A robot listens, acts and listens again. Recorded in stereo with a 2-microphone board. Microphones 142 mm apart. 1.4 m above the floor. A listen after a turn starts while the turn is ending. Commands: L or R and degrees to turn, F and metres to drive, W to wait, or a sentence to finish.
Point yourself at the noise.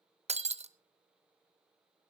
R50
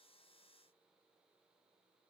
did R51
W
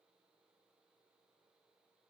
I heard breaking glass, but can't make it out now. It was about straight ahead or 80° right.